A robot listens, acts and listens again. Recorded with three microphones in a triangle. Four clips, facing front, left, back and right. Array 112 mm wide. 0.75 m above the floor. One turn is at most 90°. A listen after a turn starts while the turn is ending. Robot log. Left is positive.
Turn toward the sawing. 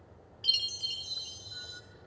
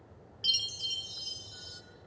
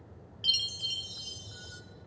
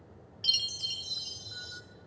cmd idle
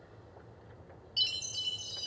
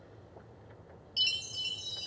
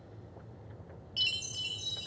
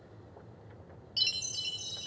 cmd idle
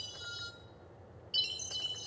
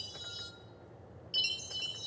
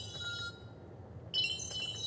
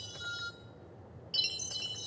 end: I can't make out sawing, only a chime.